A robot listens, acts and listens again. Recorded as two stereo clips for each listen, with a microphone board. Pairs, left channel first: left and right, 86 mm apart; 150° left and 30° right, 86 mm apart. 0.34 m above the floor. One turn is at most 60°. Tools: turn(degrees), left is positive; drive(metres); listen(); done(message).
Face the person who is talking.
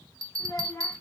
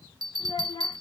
turn(degrees=60)
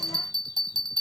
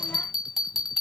turn(degrees=60)
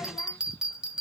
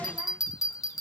turn(degrees=20)
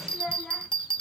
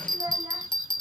done("Found it: a child speaking, straight ahead.")